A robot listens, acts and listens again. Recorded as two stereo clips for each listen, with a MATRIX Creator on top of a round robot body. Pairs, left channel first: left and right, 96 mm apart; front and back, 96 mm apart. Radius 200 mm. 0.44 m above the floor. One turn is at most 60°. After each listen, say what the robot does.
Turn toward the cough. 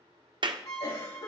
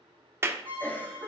Turn 60° left.
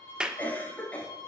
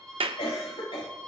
Turn 15° left.
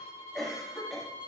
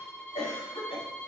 Found it: a cough, straight ahead, over 4 m away.